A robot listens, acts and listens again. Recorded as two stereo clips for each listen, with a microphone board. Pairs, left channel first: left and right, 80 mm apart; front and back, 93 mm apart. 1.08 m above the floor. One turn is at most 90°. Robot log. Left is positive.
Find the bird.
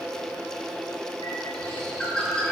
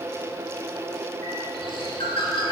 note: The bird: 10° left.
cmd yaw +10
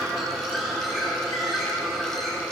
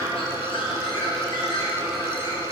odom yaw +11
end: Found it: a bird, straight ahead.